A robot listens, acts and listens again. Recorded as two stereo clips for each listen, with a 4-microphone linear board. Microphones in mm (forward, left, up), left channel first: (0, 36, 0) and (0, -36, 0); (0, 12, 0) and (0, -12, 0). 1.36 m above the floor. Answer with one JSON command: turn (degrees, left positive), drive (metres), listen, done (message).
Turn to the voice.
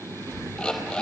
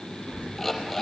{"turn": -50}
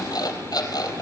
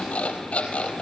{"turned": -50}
{"listen": true}
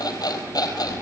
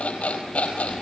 {"listen": true}
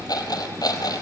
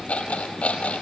{"turn": -75}
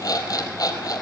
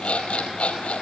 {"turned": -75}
{"listen": true}
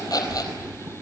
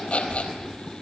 {"turn": -25}
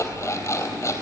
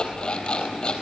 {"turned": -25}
{"done": "Facing the child speaking."}